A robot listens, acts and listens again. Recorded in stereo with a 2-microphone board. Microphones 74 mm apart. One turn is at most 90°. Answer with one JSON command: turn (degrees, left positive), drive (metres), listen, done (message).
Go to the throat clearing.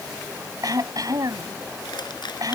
{"turn": -55}
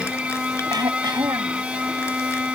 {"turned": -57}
{"turn": -70}
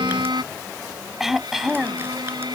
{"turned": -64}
{"drive": 1.0}
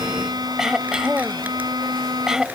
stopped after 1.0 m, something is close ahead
{"turn": -10}
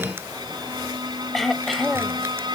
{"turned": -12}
{"done": "Something is in my way. I am facing the throat clearing but have not reached it."}